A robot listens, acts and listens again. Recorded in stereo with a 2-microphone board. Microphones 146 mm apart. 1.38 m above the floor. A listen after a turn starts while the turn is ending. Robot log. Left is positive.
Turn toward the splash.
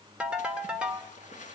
note: The splash: about 60° left or 120° left.
cmd yaw +60
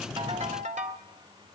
cmd idle
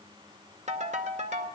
end: I heard a splash, but can't make it out now. It was about straight ahead or 60° left.